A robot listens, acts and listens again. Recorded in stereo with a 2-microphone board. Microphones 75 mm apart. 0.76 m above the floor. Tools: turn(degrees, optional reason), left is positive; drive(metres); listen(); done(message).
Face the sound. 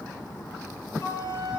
turn(degrees=40, reason="The flute: about 40° left or 140° left.")
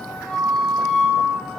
done("Facing the flute, over 4 m away.")